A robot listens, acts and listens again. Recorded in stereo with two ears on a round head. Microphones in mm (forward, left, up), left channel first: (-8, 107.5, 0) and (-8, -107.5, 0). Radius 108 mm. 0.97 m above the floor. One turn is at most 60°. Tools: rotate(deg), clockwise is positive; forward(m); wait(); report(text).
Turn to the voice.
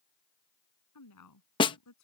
rotate(-60)
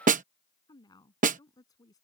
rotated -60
rotate(-15)
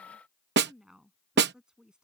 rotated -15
report("Facing the woman speaking.")